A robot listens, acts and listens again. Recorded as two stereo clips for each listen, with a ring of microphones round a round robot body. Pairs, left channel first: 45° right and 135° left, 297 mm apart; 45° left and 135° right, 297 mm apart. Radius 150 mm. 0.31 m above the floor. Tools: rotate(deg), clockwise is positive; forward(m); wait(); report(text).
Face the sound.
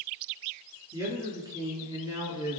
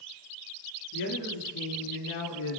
rotate(-55)
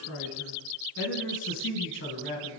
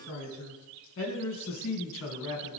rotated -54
report("Facing the man speaking, 2 to 4 m away.")